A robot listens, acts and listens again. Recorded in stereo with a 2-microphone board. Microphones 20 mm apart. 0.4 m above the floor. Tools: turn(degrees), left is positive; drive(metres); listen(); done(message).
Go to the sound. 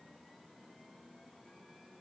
listen()
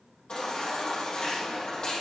turn(degrees=50)
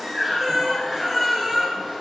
drive(metres=1.0)
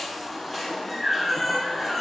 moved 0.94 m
drive(metres=1.0)
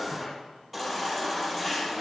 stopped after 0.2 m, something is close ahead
done("Something is in my way. I am facing the baby crying but have not reached it.")